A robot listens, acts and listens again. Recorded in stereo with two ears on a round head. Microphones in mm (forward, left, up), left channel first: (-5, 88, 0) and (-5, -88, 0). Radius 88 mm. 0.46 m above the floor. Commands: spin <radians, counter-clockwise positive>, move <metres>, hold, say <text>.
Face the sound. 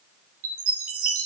spin -1.57
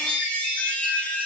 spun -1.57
say Found it: a chime, straight ahead, over 4 m away.